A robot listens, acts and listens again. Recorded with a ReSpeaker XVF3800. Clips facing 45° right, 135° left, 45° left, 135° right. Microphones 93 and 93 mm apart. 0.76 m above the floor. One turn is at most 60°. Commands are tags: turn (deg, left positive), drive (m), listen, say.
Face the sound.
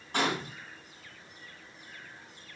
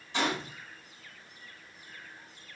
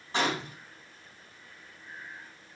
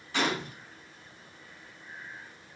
<say>Found it: a gunshot, straight ahead.</say>